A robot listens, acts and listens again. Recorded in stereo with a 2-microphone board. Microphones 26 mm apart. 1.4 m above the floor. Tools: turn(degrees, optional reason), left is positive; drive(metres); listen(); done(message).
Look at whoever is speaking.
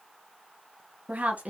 turn(degrees=-65, reason="The woman speaking: about 65° right or 115° right.")
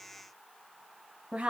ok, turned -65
turn(degrees=-45, reason="So it is at 45° right.")
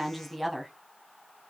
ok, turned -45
done("Facing the woman speaking, 1 to 2 m away.")